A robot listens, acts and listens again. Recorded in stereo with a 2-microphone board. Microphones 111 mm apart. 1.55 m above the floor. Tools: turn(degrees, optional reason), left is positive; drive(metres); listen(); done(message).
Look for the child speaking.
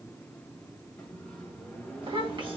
turn(degrees=-45, reason="The child speaking: about 45° right or 135° right.")
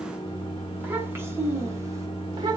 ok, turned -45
turn(degrees=-35, reason="So it is at 35° right.")
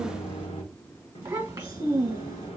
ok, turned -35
turn(degrees=-25, reason="The child speaking is now 25° right.")
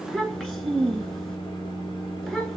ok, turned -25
turn(degrees=10, reason="The child speaking is now 10° left.")
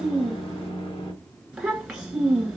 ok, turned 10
done("Found it: a child speaking, straight ahead.")